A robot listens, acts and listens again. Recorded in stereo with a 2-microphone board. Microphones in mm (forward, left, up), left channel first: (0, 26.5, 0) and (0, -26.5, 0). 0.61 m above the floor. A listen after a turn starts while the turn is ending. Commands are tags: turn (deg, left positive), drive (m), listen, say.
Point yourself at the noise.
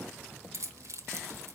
<turn deg="-65"/>
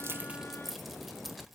<say>Found it: keys jangling, straight ahead.</say>